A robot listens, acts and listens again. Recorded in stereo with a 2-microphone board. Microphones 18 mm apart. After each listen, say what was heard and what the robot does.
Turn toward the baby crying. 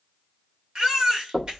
The baby crying: about 45° right or 135° right. Turn 45° right.
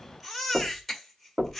Facing the baby crying, 2 to 4 m away.